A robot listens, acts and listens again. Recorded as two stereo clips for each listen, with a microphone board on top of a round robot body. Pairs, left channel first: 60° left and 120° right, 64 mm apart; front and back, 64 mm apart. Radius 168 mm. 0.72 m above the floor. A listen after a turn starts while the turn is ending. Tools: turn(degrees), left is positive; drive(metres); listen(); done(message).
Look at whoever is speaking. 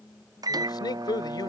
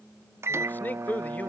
turn(degrees=65)
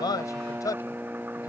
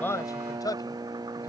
turn(degrees=30)
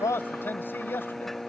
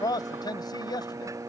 done("Facing the man speaking.")